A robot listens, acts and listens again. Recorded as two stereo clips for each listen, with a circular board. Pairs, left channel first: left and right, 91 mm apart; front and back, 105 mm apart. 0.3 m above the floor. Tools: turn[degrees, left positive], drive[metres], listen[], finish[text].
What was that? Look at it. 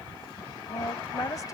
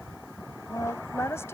Thought: The woman speaking: 55° left.
Action: turn[55]
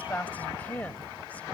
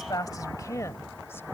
Thought: The woman speaking is now 30° left.
Action: turn[30]
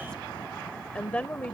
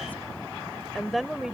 Thought: The woman speaking is now 115° left.
Action: turn[115]
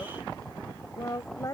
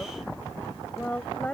Thought: The woman speaking is now 70° left.
Action: turn[70]
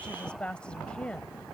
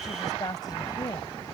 Thought: The woman speaking is now 15° left.
Action: turn[15]
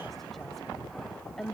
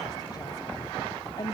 Action: finish[Found it: a woman speaking, straight ahead.]